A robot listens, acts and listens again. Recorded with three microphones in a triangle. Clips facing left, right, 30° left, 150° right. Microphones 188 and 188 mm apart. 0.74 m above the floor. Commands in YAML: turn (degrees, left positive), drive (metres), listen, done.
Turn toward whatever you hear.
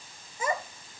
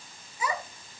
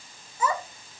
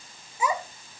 turn: 130
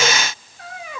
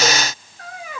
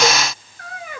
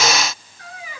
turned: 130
done: "Facing the child speaking, 2 to 4 m away."